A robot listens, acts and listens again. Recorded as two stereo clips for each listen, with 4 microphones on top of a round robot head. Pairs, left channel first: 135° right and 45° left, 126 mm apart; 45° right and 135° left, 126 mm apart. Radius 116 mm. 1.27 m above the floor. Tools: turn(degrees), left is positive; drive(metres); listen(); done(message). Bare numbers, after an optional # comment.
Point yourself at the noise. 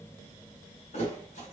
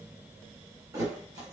# The thud: 165° right.
turn(-165)
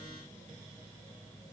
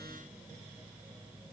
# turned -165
done("Facing where the thud came from. I can't hear it now.")